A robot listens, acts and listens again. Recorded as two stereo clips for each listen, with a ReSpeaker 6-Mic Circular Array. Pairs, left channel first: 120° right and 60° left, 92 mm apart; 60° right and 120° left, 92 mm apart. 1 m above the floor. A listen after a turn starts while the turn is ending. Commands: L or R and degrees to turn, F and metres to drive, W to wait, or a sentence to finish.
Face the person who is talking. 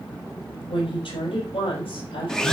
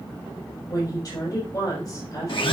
R110
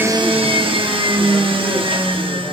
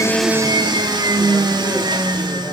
W
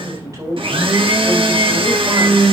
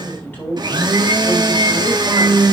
L10
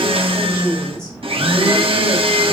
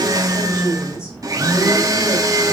W
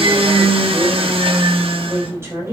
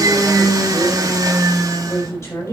Found it: a woman speaking, straight ahead, over 4 m away.